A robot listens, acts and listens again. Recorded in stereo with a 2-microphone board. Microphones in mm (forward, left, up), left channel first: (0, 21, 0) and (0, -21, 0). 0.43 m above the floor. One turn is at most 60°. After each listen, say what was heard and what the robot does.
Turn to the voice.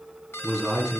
Turn 30° left.
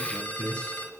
So it is at 150° left. Turn 60° left.
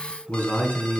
The man speaking is now 135° left. Turn 60° left.
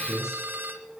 The man speaking is now 65° left. Turn 60° left.
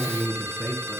Facing the man speaking.